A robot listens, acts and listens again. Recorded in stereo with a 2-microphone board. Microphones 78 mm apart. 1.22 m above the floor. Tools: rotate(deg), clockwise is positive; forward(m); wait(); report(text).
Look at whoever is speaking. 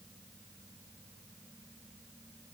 wait()
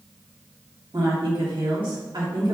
rotate(90)
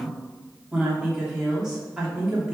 rotate(10)
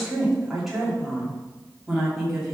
report("Found it: a woman speaking, straight ahead, 2 to 4 m away.")